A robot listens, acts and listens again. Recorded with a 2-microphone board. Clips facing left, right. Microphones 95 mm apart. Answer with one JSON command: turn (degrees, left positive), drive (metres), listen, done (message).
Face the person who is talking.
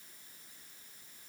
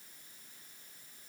{"listen": true}
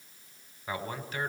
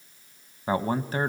{"turn": -35}
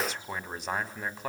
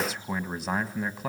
{"done": "Facing the man speaking, 1 to 2 m away."}